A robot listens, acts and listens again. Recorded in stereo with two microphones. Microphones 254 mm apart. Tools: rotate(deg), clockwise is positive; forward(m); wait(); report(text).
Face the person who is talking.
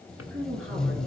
rotate(55)
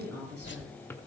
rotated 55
rotate(70)
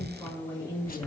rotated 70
rotate(-15)
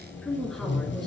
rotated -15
report("Facing the woman speaking.")